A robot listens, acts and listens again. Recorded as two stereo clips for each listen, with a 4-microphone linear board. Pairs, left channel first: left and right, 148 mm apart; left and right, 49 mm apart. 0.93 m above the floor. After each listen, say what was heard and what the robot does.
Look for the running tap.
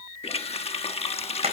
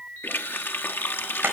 The running tap: about 45° left or 135° left. Turn 45° left.
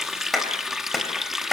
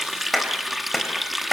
Found it: a running tap, straight ahead, 1 to 2 m away.